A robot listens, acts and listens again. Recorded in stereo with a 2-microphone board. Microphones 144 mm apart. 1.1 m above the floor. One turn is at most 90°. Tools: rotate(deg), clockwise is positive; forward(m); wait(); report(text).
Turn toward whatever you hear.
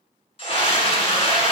rotate(-40)
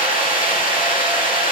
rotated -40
rotate(-90)
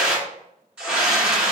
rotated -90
report("Facing the scream, 1 to 2 m away.")